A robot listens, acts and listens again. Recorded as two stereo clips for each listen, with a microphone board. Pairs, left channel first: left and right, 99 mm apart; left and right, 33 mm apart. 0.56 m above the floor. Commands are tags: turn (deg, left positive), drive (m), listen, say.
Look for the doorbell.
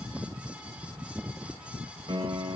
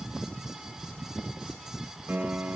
<listen/>
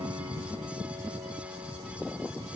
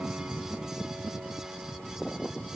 <listen/>
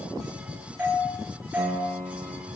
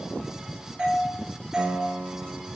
<turn deg="-15"/>
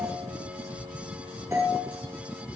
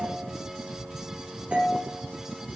<turn deg="-145"/>
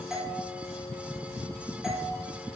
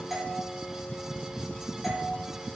<say>Facing the doorbell, over 4 m away.</say>